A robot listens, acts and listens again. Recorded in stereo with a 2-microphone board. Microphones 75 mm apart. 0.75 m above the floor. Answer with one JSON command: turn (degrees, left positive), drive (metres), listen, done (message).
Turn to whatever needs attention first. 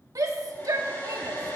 {"turn": -50}
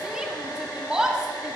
{"turn": -15}
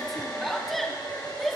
{"done": "Facing the shout, 1 to 2 m away."}